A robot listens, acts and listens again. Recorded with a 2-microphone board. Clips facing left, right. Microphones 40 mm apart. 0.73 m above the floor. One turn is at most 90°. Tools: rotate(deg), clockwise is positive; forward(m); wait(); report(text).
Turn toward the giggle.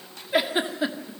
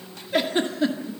rotate(-30)
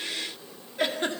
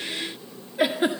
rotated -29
rotate(15)
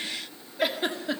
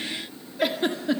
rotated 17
report("Found it: a giggle, straight ahead, 1 to 2 m away.")